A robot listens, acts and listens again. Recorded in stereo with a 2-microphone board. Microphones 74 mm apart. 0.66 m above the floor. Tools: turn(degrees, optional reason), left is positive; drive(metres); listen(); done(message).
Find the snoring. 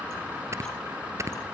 turn(degrees=-40, reason="The snoring: about 40° right or 140° right.")
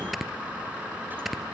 done("Found it: snoring, straight ahead.")